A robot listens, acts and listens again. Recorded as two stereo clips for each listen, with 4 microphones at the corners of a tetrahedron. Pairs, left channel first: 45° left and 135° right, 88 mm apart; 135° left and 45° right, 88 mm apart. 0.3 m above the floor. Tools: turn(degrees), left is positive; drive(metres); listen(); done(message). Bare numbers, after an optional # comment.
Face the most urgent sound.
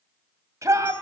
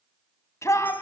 # The shout: straight behind.
turn(180)
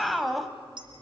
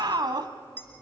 # The shout is now 45° right.
turn(-45)
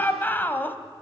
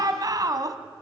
# The shout is now 20° right.
turn(-20)
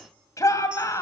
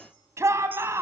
done("Facing the shout, 1 to 2 m away.")